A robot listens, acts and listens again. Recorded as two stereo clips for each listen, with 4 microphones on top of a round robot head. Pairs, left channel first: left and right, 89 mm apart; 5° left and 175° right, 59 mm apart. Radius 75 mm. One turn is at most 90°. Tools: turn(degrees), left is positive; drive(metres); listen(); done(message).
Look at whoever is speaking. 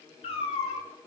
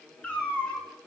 listen()
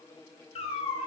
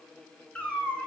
listen()
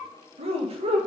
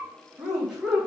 turn(degrees=-90)
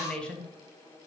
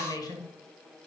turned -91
turn(degrees=10)
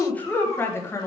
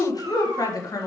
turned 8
turn(degrees=30)
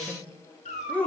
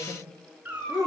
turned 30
turn(degrees=15)
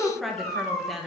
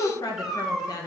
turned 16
done("Found it: a woman speaking, straight ahead, 1 to 2 m away.")